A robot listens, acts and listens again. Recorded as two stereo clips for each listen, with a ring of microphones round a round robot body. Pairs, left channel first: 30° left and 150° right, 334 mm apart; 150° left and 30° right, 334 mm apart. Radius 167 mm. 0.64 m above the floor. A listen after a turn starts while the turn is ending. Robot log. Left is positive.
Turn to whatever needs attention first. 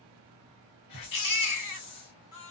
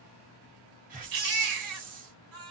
end: Found it: a baby crying, straight ahead.